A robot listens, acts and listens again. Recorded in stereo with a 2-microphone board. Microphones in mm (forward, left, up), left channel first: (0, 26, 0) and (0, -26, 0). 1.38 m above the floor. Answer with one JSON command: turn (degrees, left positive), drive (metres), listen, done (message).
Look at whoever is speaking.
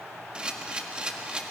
{"listen": true}
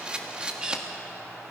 {"listen": true}
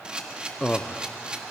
{"turn": 30}
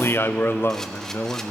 {"turn": 115}
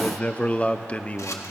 {"turn": 30}
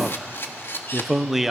{"done": "Found it: a man speaking, straight ahead, under 1 m away."}